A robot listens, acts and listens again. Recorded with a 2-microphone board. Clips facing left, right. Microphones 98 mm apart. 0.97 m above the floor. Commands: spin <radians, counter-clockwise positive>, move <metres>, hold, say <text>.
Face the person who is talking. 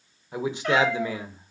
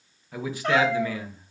spin 0.44
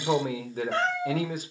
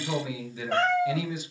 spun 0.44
spin 2.18
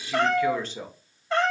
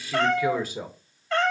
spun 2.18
spin -0.17
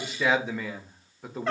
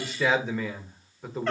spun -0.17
say Found it: a man speaking, straight ahead.